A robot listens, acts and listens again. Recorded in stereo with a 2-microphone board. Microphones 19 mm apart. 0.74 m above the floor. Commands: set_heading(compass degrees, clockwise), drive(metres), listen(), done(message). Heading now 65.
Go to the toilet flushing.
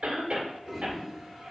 set_heading(95)
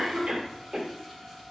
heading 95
listen()
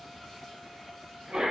listen()
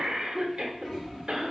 set_heading(65)
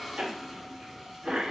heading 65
drive(1.0)
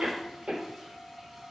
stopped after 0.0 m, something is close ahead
listen()
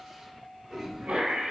done("Blocked. The toilet flushing is further on, straight ahead.")